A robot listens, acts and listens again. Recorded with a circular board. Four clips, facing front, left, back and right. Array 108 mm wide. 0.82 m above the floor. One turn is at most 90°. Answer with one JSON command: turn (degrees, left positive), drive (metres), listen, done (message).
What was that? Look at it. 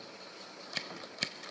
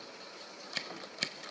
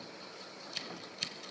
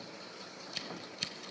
{"turn": 45}
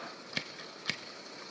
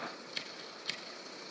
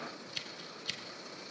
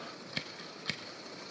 {"turn": -20}
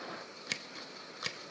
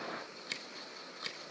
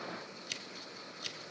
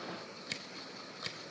{"done": "Facing the scissors."}